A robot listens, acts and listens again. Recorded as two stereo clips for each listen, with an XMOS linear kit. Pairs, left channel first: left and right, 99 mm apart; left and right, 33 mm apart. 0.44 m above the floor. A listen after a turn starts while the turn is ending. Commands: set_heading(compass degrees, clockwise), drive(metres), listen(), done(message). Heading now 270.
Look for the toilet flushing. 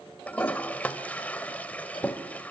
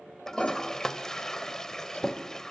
set_heading(240)
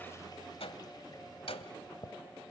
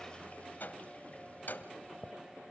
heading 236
set_heading(106)
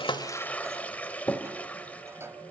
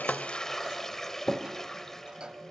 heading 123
set_heading(108)
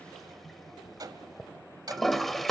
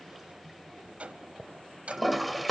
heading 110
done("Facing the toilet flushing.")